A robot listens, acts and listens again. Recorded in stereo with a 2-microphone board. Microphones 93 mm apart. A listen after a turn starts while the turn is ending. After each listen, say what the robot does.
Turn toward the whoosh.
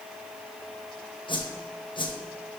Turn 55° left.
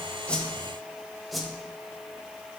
Found it: a whoosh, straight ahead.